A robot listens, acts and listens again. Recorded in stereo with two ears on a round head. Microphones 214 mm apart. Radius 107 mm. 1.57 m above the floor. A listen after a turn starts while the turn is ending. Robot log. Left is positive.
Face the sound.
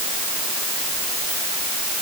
cmd idle
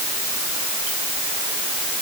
cmd idle
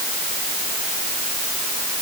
end: I can't make out anything to turn to.